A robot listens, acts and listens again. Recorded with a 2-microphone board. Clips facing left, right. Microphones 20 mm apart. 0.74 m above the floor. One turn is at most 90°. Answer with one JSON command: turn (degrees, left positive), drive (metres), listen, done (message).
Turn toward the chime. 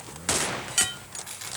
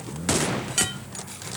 {"listen": true}
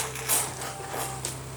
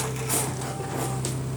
{"listen": true}
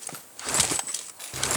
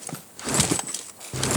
{"done": "I can't make out a chime to turn to."}